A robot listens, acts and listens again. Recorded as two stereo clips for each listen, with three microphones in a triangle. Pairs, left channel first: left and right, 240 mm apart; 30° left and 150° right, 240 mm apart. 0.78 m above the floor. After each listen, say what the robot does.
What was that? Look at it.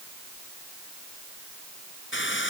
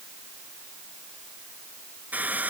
Turn 125° left.
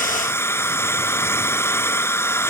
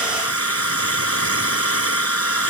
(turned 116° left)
Turn 10° left.
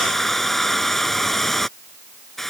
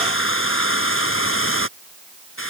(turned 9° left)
Found it: a hair dryer, straight ahead.